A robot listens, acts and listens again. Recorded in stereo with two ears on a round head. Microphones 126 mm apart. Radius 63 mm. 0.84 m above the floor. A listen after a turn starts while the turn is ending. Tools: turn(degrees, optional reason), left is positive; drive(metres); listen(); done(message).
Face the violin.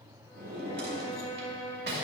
turn(degrees=15, reason="The violin: about 15° left or 165° left.")
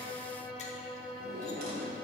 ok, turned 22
done("Facing the violin, 1 to 2 m away.")